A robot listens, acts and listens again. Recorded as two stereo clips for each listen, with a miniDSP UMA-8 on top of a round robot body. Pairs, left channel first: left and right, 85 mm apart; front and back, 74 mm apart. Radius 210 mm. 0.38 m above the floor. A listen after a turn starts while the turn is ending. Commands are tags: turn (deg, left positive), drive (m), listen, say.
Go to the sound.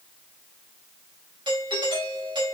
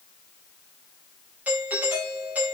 <turn deg="-110"/>
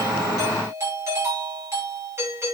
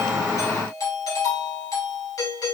<turn deg="-35"/>
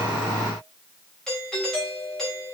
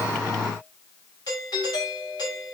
<drive m="1.0"/>
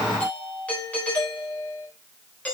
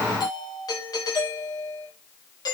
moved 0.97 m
<turn deg="15"/>
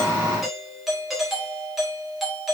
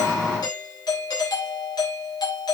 <drive m="1.0"/>
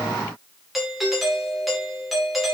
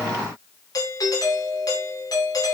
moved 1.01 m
<drive m="1.0"/>
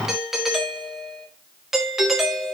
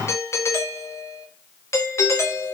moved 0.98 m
<drive m="1.0"/>
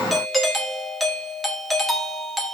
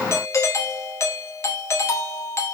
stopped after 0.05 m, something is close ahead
<say>I am next to the doorbell.</say>